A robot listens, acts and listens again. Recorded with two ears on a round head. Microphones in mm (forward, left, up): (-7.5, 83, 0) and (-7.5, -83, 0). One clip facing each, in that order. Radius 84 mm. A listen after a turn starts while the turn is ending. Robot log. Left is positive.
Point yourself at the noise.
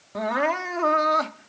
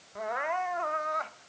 cmd yaw +90
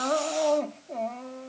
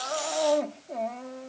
end: Found it: crying, straight ahead.